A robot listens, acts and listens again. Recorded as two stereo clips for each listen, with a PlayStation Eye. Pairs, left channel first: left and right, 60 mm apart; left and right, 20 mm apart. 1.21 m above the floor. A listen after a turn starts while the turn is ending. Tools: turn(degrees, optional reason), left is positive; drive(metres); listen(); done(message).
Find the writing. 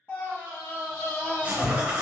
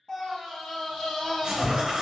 turn(degrees=-25, reason="The writing: about 25° right or 155° right.")
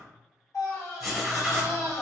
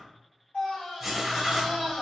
done("Facing the writing, under 1 m away.")